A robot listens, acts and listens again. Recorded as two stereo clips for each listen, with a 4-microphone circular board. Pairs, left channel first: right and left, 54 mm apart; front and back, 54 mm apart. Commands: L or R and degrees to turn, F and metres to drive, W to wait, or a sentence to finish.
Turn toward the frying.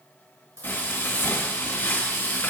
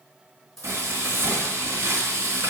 R150
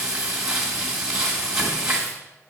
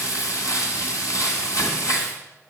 Facing the frying.